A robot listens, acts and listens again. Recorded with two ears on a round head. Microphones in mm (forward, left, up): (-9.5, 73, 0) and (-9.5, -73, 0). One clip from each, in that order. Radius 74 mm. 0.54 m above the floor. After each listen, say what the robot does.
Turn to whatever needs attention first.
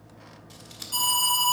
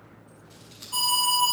Turn 35° left.
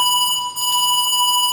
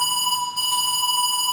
Turn 105° left.
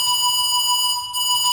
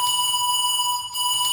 Turn 20° left.
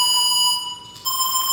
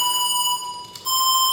Facing the alarm, over 4 m away.